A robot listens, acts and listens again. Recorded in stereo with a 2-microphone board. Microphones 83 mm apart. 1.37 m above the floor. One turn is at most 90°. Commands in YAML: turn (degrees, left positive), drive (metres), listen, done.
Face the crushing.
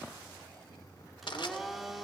turn: 75
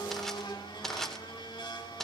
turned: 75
done: "Facing the crushing."